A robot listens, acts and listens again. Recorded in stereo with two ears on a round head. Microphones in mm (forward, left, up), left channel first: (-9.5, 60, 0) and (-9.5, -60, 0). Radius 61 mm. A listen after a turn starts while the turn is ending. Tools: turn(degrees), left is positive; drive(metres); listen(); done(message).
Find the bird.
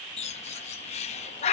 turn(degrees=55)
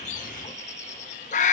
turn(degrees=65)
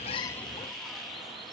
listen()
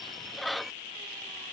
done("Found it: a bird, straight ahead.")